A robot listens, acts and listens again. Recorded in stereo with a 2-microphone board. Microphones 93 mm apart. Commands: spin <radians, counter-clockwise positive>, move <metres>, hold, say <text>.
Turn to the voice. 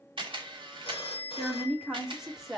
spin 0.52
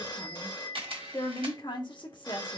spin 2.09
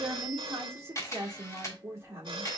spin -0.52
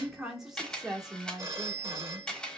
say Facing the woman speaking, 1 to 2 m away.